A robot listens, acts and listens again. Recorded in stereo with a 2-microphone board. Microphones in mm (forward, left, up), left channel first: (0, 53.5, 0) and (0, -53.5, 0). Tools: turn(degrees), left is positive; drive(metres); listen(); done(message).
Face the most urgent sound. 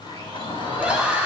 turn(degrees=-30)
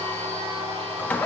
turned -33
listen()
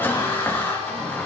turn(degrees=20)
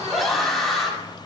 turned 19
done("Found it: a scream, straight ahead.")